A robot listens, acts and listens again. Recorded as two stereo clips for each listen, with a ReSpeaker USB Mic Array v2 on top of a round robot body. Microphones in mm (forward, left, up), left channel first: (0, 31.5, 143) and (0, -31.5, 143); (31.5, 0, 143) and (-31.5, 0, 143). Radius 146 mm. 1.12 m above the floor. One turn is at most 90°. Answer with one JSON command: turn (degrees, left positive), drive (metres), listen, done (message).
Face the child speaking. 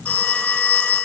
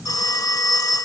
{"listen": true}
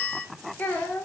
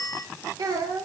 {"turn": 90}
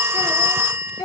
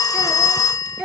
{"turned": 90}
{"turn": 90}
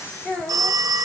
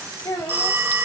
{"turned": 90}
{"turn": 15}
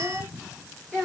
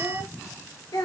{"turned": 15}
{"turn": 10}
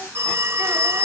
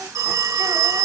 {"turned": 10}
{"listen": true}
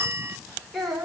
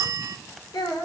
{"done": "Facing the child speaking."}